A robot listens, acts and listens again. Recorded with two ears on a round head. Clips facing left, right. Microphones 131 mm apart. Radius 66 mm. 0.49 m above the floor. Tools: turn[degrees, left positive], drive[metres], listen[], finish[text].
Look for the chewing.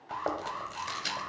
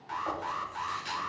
Action: turn[90]
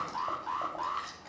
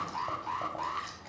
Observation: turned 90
Action: finish[Found it: chewing, straight ahead.]